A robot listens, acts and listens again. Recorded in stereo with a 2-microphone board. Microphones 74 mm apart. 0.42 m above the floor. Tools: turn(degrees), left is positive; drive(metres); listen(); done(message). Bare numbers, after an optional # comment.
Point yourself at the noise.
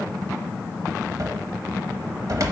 # The cupboard door: about 50° right or 130° right.
turn(-50)
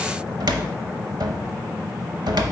# So it is at 75° right.
turn(-75)
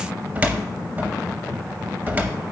# The cupboard door is now 25° right.
turn(-25)
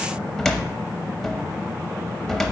done("Facing the cupboard door, under 1 m away.")